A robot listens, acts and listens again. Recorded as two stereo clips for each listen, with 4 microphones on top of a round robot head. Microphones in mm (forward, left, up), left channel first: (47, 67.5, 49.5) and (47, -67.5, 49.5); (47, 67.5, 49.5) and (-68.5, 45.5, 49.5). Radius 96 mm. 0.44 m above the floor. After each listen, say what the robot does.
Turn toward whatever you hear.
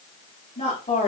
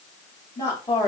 Turn 55° left.
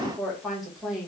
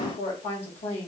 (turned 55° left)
Found it: a woman speaking, straight ahead, 2 to 4 m away.